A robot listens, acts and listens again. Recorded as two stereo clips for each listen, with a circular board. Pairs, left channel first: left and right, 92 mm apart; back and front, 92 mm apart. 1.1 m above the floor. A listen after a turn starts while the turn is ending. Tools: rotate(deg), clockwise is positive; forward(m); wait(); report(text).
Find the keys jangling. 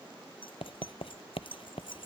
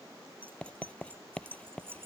rotate(-65)
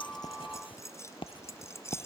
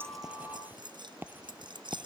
rotate(-30)
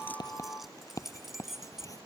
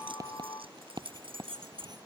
report("Facing the keys jangling.")